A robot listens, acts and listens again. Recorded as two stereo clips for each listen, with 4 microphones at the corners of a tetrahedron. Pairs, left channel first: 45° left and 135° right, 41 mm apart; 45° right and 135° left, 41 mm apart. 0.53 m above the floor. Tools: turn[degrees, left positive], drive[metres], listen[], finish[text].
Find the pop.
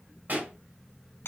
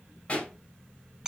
Thought: The pop: 95° right.
Action: turn[-95]
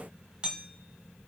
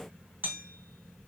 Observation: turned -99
Action: finish[Facing where the pop came from. I can't hear it now.]